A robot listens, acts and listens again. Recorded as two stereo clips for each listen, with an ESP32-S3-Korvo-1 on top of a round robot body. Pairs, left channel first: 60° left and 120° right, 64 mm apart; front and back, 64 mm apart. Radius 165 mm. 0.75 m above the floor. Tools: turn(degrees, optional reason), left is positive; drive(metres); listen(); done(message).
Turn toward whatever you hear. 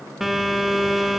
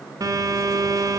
turn(degrees=155, reason="The phone buzzing: 155° left.")
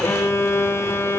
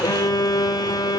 turn(degrees=10, reason="The phone buzzing is now 10° left.")
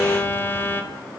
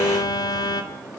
done("Found it: a phone buzzing, straight ahead, 2 to 4 m away.")